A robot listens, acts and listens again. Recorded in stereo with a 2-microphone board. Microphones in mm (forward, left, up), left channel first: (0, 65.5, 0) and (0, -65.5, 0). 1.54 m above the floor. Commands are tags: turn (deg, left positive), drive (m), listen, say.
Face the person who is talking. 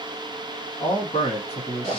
<turn deg="50"/>
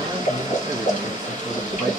<listen/>
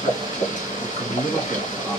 <say>Facing the man speaking, 1 to 2 m away.</say>